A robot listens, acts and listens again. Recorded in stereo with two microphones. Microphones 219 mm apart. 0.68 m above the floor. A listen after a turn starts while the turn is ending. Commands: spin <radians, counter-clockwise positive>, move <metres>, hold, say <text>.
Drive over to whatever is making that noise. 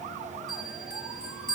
spin 0.87
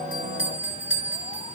spin 1.40
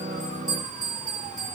spin -0.26
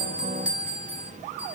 move 1.0
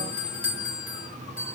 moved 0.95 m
spin -0.17
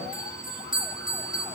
move 1.0
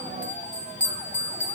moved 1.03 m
move 1.0
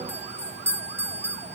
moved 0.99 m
spin -0.17
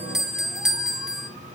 move 1.0
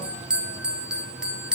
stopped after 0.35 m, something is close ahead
say I am next to the bell.